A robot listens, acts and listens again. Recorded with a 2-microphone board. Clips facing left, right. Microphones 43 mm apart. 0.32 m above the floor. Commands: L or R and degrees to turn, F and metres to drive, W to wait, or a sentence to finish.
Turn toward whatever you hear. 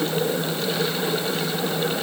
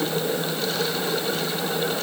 W
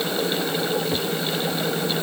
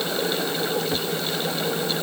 W
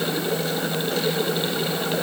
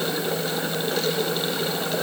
I can't make out anything.